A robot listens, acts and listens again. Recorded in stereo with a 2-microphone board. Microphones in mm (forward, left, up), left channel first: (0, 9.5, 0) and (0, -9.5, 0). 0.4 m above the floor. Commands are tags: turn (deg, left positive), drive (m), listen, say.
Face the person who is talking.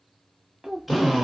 <turn deg="-35"/>
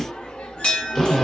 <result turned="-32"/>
<listen/>
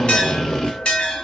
<listen/>
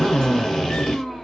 <say>I heard a child speaking, but can't make it out now. It was about 5° right or 115° right.</say>